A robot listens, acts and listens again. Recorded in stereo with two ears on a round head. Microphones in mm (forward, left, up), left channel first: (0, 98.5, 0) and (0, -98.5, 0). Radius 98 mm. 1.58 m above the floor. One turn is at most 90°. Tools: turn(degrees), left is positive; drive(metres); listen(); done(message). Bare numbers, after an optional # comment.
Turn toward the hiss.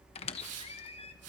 turn(-90)
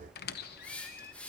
done("Found it: a hiss, straight ahead.")